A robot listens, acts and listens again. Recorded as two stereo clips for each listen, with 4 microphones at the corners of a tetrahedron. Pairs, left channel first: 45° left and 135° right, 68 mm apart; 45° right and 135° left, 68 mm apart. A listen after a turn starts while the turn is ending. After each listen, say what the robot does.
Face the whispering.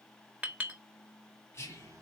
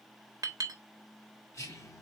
Found it: whispering, straight ahead, 2 to 4 m away.